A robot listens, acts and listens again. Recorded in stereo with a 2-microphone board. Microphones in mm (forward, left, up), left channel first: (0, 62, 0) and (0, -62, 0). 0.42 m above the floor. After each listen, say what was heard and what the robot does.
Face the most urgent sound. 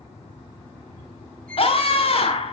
The scream: about 50° left or 130° left. Turn 50° left.
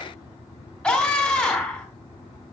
Facing the scream, 2 to 4 m away.